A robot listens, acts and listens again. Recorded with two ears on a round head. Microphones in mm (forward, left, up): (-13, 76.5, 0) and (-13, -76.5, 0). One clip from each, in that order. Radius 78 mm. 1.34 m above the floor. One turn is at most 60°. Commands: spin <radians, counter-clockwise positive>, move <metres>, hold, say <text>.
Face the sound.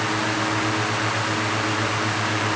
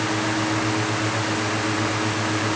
hold
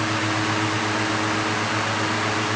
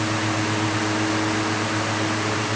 hold
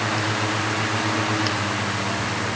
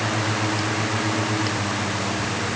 say I can't make out anything.